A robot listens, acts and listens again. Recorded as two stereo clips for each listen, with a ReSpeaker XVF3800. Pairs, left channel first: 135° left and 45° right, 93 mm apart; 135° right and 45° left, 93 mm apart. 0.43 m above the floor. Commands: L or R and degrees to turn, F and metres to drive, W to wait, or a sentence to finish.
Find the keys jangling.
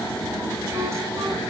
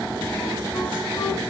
W
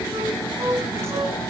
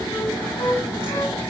W
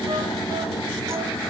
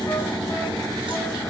I can't make out keys jangling, only a flute.